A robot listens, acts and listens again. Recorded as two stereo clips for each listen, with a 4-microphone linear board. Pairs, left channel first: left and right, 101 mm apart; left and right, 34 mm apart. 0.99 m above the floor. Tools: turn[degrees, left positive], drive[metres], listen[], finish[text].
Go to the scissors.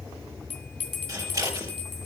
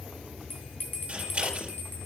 Thought: The scissors: about 35° right or 145° right.
Action: turn[-35]
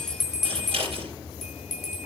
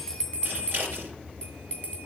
Thought: So it is at 110° right.
Action: turn[-110]
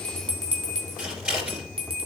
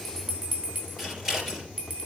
Thought: The scissors is now 10° right.
Action: turn[-10]
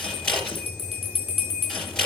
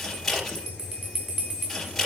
Action: drive[1.0]
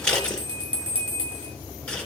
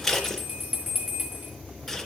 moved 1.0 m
Thought: The scissors is now 10° left.
Action: turn[10]
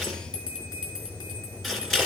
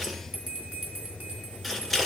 Action: drive[1.0]
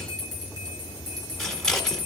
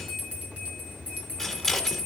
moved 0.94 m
Action: drive[1.0]
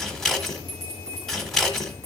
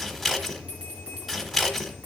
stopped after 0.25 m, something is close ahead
Action: finish[I am next to the scissors.]